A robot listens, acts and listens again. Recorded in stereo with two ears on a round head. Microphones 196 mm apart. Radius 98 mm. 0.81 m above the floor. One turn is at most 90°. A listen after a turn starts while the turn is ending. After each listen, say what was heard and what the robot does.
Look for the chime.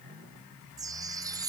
The chime: about 15° right or 165° right. Turn 15° right.
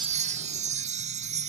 So it is at 150° right. Turn 90° right.
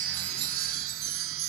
The chime is now 60° right. Turn 60° right.
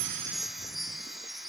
Found it: a chime, straight ahead.